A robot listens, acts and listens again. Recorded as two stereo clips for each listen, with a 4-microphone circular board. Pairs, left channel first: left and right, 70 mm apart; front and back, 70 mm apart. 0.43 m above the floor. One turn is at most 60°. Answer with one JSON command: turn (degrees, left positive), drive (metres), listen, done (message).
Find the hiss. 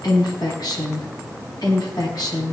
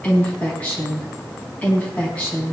{"listen": true}
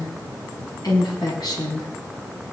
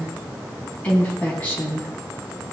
{"listen": true}
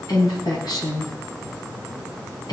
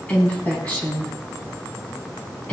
{"done": "I can't make out a hiss to turn to."}